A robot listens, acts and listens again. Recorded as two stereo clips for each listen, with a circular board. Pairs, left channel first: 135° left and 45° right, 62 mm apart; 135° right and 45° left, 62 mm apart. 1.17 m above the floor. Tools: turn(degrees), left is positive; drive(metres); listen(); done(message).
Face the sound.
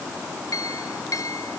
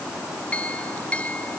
turn(degrees=155)
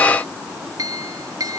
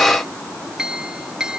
turn(degrees=-35)
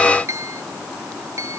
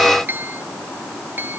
turn(degrees=-10)
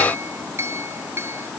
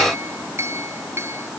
done("Facing the clink.")